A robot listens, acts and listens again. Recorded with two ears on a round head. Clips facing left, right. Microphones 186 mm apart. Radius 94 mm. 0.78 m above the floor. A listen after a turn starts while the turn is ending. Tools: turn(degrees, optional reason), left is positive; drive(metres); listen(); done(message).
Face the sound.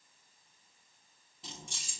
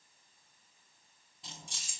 turn(degrees=30)
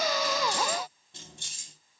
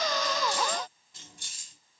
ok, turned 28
turn(degrees=155, reason="So it is at 155° left.")
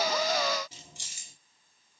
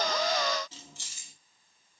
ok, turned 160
turn(degrees=15, reason="The keys jangling is now 15° left.")
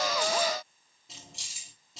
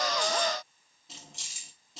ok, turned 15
done("Found it: keys jangling, straight ahead.")